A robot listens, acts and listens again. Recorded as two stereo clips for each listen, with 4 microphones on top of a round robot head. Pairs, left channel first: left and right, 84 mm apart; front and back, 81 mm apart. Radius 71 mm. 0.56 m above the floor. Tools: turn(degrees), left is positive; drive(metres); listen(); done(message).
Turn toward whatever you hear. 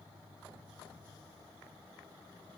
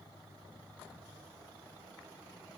listen()
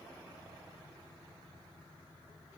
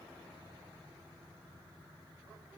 listen()
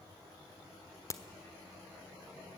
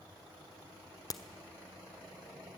turn(degrees=40)
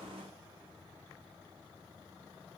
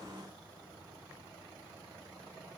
done("I heard a crack from this way, but can't make it out now.")